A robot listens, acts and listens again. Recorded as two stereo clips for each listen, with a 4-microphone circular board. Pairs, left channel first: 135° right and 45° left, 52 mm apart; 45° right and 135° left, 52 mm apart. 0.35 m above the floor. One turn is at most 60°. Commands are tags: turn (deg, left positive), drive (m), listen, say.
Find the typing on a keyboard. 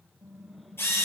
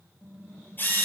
<say>Found it: typing on a keyboard, straight ahead, over 4 m away.</say>